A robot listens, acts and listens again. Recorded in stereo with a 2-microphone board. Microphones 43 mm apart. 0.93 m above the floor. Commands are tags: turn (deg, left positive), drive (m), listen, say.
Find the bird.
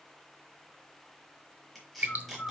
<turn deg="30"/>
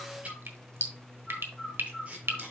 <say>Found it: a bird, straight ahead, 2 to 4 m away.</say>